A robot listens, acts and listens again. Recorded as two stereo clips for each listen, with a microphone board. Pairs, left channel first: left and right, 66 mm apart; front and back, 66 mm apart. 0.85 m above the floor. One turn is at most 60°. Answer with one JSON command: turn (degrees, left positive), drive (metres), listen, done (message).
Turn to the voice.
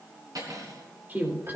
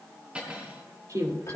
{"turn": -60}
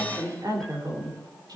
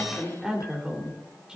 {"turn": -60}
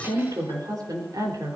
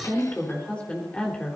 {"turn": -60}
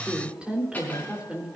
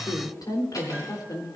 {"turn": -15}
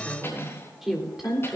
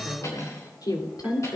{"done": "Facing the woman speaking, 2 to 4 m away."}